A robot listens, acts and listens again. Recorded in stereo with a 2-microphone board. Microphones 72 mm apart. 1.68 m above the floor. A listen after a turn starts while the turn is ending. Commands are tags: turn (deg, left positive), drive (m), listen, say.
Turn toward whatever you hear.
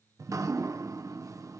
<turn deg="-45"/>
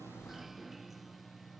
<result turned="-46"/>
<say>Found it: dripping, straight ahead.</say>